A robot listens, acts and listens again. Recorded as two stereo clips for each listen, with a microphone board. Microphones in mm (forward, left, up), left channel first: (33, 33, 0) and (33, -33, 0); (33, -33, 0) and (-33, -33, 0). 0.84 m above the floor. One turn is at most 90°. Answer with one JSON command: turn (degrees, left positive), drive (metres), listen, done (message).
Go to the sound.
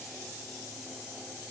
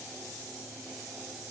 {"listen": true}
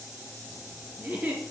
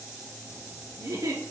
{"turn": -90}
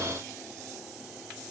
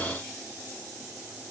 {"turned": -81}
{"turn": -80}
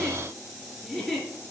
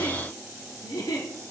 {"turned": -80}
{"drive": 1.0}
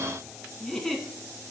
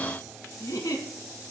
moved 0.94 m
{"drive": 1.0}
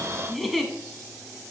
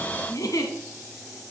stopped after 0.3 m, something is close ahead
{"done": "Arrived at the giggle, straight ahead."}